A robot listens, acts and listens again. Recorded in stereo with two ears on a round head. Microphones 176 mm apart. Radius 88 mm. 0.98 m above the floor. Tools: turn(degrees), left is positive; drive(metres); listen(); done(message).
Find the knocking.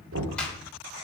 turn(degrees=-70)
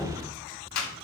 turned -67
done("Facing the knocking.")